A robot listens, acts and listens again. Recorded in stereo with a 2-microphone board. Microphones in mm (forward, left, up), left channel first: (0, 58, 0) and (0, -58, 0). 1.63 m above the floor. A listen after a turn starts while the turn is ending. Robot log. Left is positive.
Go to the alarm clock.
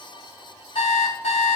note: The alarm clock: about 75° left or 105° left.
cmd yaw +75
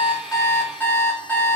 note: So it is at 20° left.
cmd yaw +20
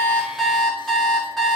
cmd fwd 1.0
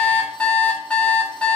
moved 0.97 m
note: The alarm clock is now 10° left.
cmd yaw +10
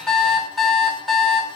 cmd fwd 1.0
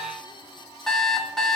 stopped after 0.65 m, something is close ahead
end: I am next to the alarm clock.